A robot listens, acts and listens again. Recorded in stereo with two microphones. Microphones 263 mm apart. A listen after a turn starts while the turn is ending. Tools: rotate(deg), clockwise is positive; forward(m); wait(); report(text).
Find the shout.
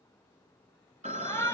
rotate(-30)
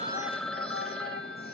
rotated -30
rotate(-140)
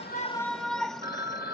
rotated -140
report("Facing the shout.")